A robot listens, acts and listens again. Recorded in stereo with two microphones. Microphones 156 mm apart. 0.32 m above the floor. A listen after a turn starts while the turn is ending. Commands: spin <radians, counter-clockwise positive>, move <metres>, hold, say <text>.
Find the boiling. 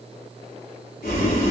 spin 1.22
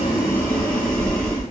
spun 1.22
say Found it: boiling, straight ahead.